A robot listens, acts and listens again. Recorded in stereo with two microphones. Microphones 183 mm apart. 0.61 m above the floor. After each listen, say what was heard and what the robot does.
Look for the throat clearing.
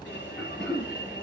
Turn 30° left.
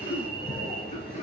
So it is at 140° left. Turn 140° left.
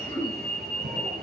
The throat clearing is now 15° left. Turn 15° left.
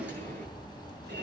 Keep listening.
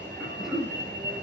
Facing the throat clearing, 2 to 4 m away.